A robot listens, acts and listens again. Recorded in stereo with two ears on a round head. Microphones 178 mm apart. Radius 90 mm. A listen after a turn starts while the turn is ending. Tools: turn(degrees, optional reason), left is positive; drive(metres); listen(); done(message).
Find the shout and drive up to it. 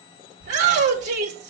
turn(degrees=-55, reason="The shout: about 55° right or 125° right.")
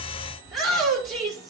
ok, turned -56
drive(metres=1.0)
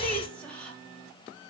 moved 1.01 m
drive(metres=1.0)
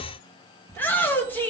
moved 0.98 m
turn(degrees=10, reason="The shout is now 10° left.")
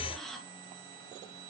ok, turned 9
listen()
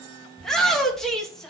drive(metres=1.0)
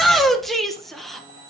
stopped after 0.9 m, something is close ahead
done("Arrived at the shout, straight ahead.")